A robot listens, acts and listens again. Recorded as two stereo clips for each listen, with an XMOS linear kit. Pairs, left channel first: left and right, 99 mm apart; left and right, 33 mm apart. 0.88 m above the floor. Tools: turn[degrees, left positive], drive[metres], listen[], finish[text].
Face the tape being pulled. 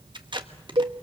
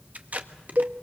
Thought: The tape being pulled: about 50° right or 130° right.
Action: turn[-50]
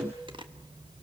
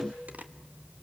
Thought: So it is at 65° right.
Action: turn[-65]
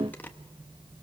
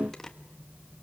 Thought: The tape being pulled is now 20° left.
Action: turn[20]
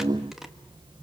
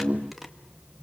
Action: finish[Found it: tape being pulled, straight ahead.]